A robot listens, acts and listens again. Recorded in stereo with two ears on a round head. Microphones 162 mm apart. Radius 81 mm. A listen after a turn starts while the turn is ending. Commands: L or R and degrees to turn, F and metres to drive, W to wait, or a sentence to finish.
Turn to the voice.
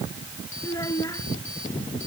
L20
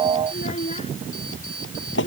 L140
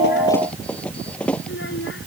L70
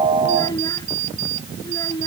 L20
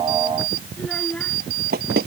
Found it: a child speaking, straight ahead.